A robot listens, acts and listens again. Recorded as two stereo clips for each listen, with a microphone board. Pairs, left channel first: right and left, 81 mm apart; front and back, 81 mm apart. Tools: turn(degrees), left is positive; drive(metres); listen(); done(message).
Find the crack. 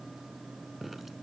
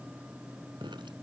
listen()
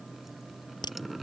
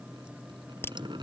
turn(degrees=-60)
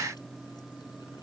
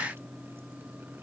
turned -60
done("Facing where the crack came from. I can't hear it now.")